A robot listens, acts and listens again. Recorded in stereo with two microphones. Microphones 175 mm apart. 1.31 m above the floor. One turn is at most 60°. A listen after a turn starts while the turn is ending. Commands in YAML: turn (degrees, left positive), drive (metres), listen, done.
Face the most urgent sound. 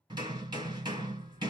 listen: true
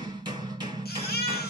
turn: 60
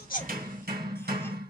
listen: true
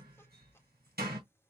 listen: true
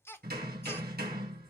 turn: 15
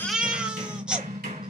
done: "Facing the baby crying, 1 to 2 m away."